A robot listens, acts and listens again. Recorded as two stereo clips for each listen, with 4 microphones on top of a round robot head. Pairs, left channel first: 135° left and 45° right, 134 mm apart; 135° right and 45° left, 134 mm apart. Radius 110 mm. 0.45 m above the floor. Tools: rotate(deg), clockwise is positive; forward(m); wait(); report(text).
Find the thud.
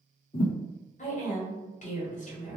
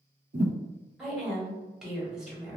rotate(-80)
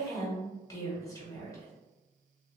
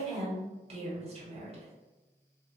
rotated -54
rotate(-25)
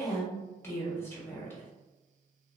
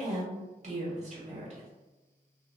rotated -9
rotate(-15)
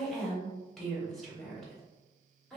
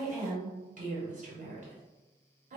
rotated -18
report("Facing where the thud came from. I can't hear it now.")